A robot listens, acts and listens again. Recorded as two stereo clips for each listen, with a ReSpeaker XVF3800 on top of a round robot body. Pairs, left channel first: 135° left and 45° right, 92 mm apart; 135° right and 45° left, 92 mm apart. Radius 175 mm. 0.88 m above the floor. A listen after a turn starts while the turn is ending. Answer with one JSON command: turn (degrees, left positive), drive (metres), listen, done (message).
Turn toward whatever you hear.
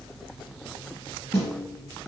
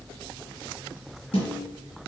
{"turn": -155}
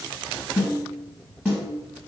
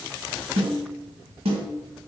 {"turn": 30}
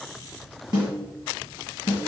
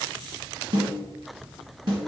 {"done": "Found it: a snare drum, straight ahead."}